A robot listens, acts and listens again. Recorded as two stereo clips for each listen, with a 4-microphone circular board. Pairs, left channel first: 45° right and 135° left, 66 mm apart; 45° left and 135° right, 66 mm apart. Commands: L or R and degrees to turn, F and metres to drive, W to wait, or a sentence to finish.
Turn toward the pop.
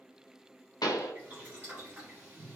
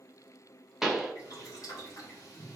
R50
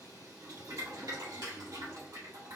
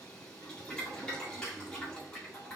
Facing where the pop came from. I can't hear it now.